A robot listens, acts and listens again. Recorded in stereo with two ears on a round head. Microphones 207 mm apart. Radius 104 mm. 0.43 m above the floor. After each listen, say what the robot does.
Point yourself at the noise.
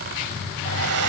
Turn 70° right.
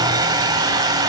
Turn 20° right.
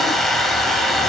Found it: a hair dryer, straight ahead.